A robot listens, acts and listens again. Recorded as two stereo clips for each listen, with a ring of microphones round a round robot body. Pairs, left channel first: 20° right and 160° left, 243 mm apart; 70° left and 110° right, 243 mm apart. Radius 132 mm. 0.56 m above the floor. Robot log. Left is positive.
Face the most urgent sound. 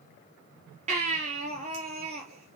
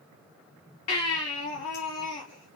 note: The baby crying: 95° left.
cmd yaw +95
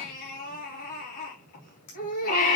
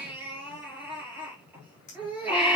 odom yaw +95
note: The baby crying is now 30° right.
cmd yaw -30
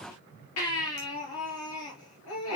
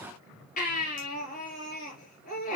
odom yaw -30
end: Found it: a baby crying, straight ahead, over 4 m away.